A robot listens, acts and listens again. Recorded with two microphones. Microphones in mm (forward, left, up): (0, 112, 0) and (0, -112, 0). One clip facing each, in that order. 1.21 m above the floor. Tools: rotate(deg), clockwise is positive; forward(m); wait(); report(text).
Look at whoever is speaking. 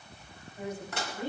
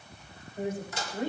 rotate(50)
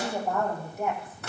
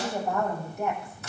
report("Found it: a woman speaking, straight ahead.")